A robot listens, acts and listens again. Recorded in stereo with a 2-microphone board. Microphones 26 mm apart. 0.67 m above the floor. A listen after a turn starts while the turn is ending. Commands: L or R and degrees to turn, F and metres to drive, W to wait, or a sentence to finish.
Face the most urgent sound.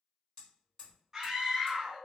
R20
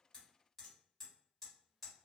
W
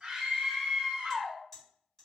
R135
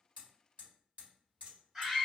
R20
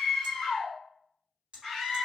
Facing the scream, 1 to 2 m away.